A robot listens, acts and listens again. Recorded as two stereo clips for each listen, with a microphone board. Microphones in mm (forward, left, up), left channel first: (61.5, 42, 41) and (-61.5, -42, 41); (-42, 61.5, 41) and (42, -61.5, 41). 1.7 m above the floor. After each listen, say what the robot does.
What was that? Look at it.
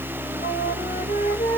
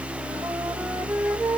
Turn 30° left.
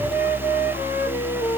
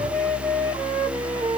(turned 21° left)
Turn 10° left.
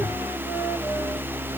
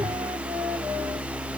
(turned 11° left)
Keep listening.
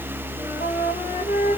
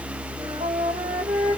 Facing the flute, 2 to 4 m away.